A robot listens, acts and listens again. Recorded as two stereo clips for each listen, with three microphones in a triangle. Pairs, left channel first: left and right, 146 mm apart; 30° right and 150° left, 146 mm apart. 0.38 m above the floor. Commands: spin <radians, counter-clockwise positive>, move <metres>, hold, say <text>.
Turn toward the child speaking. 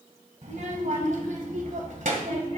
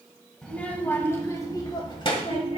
spin -1.31
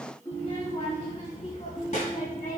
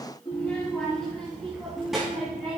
spin 1.13
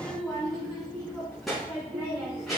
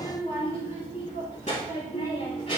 say Found it: a child speaking, straight ahead.